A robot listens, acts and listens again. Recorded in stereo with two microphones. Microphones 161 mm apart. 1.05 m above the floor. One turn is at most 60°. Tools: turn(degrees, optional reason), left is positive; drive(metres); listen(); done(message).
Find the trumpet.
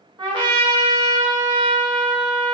turn(degrees=-30, reason="The trumpet: about 30° right or 150° right.")
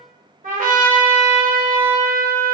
turn(degrees=-60, reason="So it is at 120° right.")
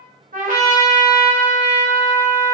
turn(degrees=-60, reason="The trumpet is now 60° right.")
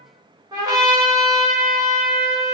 turn(degrees=-25, reason="The trumpet is now 25° right.")
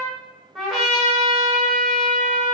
done("Found it: a trumpet, straight ahead.")